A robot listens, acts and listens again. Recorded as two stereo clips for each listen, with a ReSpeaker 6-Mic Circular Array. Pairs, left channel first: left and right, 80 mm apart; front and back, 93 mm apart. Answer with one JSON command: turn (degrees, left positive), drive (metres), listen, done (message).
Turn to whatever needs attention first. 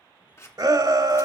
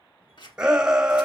{"turn": -100}
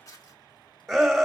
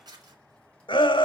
{"done": "Found it: a shout, straight ahead, 1 to 2 m away."}